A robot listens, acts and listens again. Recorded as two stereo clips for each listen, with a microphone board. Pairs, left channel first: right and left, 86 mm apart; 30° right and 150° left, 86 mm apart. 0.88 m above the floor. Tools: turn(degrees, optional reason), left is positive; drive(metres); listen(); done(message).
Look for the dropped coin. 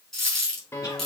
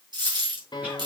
turn(degrees=-175, reason="The dropped coin: 175° right.")
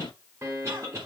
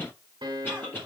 done("Facing where the dropped coin came from. I can't hear it now.")